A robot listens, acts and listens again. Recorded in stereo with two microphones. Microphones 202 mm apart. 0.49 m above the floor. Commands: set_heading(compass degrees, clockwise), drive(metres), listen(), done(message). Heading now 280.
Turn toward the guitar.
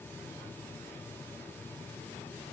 listen()
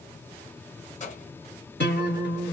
set_heading(215)
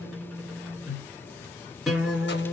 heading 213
done("Found it: a guitar, straight ahead, 1 to 2 m away.")